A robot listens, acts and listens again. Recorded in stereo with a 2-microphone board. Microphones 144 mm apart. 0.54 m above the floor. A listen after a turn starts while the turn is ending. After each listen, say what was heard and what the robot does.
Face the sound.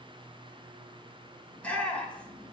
Turn 30° left.
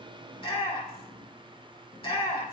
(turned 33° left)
So it is at 135° left. Turn 135° left.
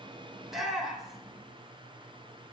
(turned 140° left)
Facing the shout, 2 to 4 m away.